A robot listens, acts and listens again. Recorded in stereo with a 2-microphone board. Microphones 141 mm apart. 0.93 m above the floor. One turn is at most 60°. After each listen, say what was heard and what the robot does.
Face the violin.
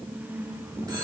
Keep listening.
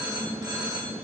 Keep listening.
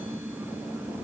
I can't make out a violin, only a phone ringing.